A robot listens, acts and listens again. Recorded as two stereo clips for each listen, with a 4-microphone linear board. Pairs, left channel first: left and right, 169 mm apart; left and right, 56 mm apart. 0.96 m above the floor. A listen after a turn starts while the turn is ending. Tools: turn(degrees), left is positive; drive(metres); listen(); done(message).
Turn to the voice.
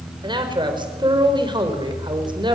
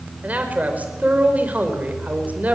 turn(degrees=-30)
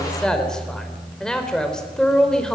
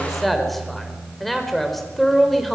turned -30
done("Found it: a man speaking, straight ahead.")